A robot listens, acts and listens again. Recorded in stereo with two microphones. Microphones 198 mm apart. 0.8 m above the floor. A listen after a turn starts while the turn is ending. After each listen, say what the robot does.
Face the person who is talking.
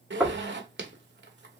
Keep listening.
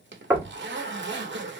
Keep listening.
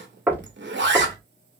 I can't make out anyone speaking to turn to.